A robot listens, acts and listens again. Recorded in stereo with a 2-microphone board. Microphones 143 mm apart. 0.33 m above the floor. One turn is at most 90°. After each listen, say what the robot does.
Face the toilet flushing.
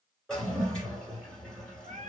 Turn 30° left.
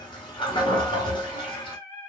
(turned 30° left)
Turn 90° left.
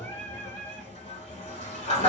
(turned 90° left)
Turn 50° left.
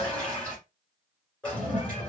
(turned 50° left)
Turn 10° left.
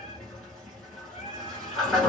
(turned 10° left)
Facing the toilet flushing, 1 to 2 m away.